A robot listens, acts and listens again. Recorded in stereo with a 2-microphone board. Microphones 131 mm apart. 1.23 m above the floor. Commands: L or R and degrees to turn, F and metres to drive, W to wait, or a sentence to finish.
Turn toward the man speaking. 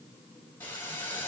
W
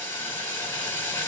W
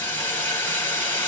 I can't make out a man speaking to turn to.